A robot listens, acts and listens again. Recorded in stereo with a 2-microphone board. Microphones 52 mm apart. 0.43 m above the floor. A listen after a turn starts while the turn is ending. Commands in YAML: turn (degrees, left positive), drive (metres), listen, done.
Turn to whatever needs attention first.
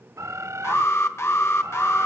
turn: 55
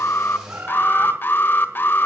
turn: 50
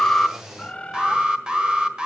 turn: -20
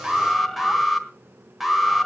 done: "Facing the alarm, 1 to 2 m away."